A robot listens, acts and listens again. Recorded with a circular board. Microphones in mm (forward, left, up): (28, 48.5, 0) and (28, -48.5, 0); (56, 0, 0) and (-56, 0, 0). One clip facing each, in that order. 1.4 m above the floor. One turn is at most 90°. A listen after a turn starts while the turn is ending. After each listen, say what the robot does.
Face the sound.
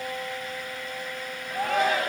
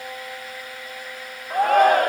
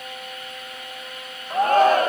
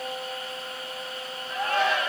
Turn 50° right.
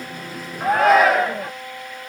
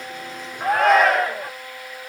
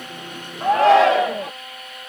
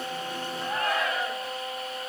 Facing the shout.